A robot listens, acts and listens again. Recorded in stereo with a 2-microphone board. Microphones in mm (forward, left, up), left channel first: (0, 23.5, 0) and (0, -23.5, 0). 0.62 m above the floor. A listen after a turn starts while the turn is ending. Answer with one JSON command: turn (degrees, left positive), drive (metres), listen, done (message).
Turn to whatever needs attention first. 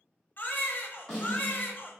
{"turn": 45}
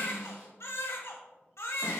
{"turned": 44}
{"turn": 90}
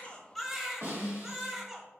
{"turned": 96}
{"done": "Found it: a baby crying, straight ahead, under 1 m away."}